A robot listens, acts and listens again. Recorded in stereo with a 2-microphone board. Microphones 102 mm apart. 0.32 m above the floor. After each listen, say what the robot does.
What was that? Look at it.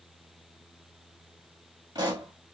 Turn 45° right.
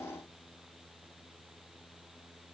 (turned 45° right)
Keep listening.
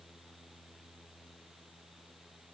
I heard a pop, but can't make it out now. It was about straight ahead or 90° right.